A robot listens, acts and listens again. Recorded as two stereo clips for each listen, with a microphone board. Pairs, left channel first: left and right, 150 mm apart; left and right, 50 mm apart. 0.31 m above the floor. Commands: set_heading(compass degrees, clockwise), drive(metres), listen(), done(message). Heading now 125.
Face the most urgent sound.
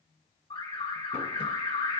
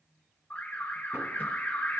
set_heading(90)
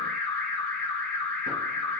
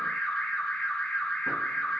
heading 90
set_heading(80)
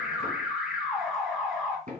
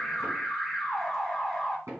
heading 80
done("Found it: an alarm, straight ahead.")